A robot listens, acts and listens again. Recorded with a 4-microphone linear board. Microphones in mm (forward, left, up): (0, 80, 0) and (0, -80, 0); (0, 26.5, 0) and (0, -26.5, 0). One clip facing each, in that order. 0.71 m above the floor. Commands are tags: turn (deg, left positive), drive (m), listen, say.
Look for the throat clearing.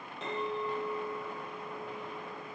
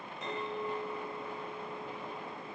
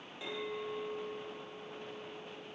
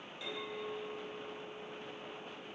<listen/>
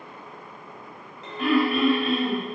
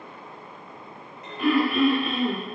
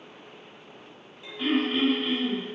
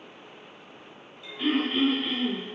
<turn deg="-30"/>
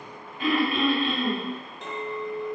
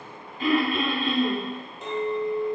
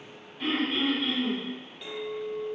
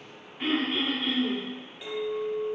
<turn deg="-145"/>
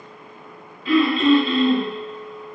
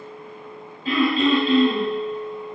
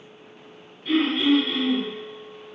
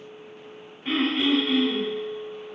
<turn deg="-45"/>
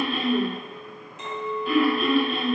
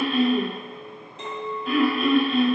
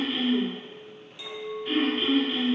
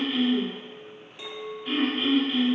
<say>Facing the throat clearing.</say>